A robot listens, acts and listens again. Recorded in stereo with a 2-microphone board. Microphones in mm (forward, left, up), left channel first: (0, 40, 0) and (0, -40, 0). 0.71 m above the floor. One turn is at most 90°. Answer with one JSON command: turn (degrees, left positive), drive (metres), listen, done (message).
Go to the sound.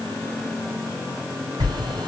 {"turn": -90}
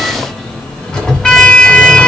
{"turn": 10}
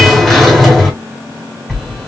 {"drive": 1.0}
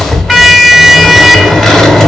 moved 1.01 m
{"drive": 1.0}
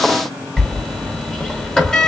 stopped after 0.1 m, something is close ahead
{"turn": 10}
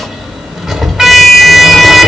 {"done": "Arrived at the sliding door, straight ahead."}